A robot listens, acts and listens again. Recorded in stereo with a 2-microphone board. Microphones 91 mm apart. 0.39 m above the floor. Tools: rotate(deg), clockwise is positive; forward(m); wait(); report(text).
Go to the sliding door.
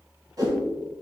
wait()
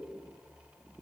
wait()
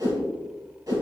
report("I can't make out a sliding door, only a whoosh.")